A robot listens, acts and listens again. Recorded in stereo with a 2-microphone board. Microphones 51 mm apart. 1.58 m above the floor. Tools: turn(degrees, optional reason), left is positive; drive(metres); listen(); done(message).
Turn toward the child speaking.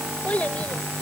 turn(degrees=30, reason="The child speaking: about 30° left or 150° left.")
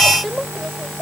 done("Facing the child speaking.")